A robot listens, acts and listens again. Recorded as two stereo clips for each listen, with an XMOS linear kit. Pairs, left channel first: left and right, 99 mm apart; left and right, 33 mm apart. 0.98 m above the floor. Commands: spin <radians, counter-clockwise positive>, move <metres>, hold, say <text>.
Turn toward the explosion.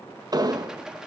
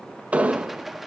spin -0.79
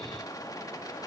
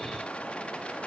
hold
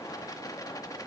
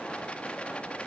say I heard an explosion, but can't make it out now. It was about straight ahead or 90° right.